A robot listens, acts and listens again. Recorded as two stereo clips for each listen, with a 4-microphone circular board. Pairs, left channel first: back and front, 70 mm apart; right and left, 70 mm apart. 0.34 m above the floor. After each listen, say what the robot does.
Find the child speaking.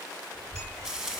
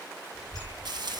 Turn 15° left.
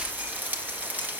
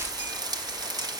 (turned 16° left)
Facing the child speaking, over 4 m away.